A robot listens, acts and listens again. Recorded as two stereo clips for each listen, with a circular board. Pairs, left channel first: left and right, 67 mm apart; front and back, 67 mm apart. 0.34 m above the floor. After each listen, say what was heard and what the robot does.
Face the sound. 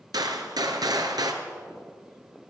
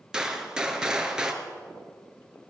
The gunshot: 100° right. Turn 100° right.
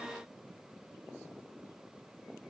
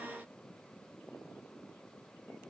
Facing where the gunshot came from. I can't hear it now.